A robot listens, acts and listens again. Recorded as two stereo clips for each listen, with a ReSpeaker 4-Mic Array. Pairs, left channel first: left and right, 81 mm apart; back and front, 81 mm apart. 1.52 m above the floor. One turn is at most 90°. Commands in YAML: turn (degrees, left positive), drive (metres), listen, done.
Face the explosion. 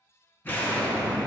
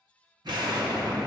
turn: 25
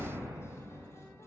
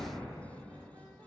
done: "Facing where the explosion came from. I can't hear it now."